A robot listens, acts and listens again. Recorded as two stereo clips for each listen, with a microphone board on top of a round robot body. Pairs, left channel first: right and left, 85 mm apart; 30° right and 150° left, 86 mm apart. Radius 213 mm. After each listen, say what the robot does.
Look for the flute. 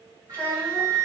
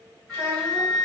Turn 50° left.
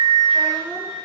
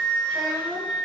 Turn 25° right.
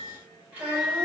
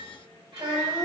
Turn 10° left.
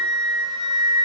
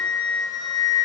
Facing the flute, 1 to 2 m away.